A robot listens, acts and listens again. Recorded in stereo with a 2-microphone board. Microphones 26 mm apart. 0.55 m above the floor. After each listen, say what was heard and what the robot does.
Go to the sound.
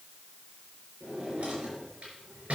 The drawer: about 60° right or 120° right. Turn 60° right.
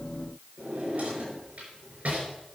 So it is at 65° right. Turn 65° right.
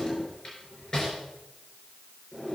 The drawer is now 25° left. Turn 25° left.
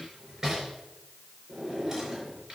The drawer is now 15° right. Turn 15° right.
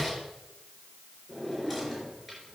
Drive 1.0 m forward.
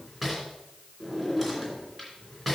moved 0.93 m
Drive 1.0 m forward.
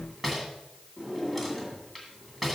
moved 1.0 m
Drive 1.0 m forward.
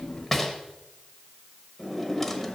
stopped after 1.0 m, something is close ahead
The drawer is now 10° left. Turn 10° left.
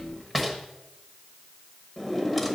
I am next to the drawer.